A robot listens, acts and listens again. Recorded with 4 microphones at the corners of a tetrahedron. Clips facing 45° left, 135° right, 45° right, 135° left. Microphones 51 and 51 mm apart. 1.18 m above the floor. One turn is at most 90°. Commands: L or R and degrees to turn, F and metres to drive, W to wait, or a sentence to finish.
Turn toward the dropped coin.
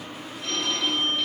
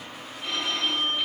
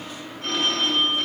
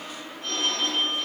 W
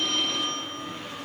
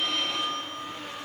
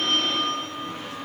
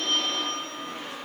W
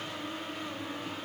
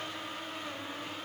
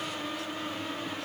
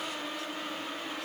I can't make out a dropped coin, only a phone ringing.